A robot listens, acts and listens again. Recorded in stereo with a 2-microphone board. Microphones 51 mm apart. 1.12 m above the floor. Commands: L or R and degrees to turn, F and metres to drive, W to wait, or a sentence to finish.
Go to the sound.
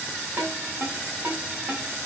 R40
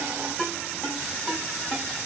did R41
F1.0
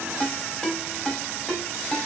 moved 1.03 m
F1.0
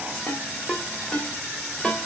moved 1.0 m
L10
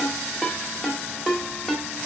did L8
F1.0
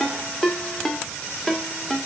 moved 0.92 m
F1.0
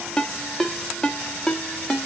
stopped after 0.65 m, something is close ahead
L10
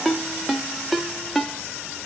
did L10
Arrived at the ringtone, straight ahead.